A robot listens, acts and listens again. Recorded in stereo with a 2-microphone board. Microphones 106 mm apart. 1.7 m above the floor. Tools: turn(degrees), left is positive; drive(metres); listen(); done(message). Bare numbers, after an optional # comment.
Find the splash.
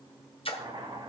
# The splash: about 60° left or 120° left.
turn(60)
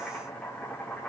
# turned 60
listen()
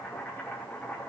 done("I heard a splash, but can't make it out now. It was about straight ahead or 60° left.")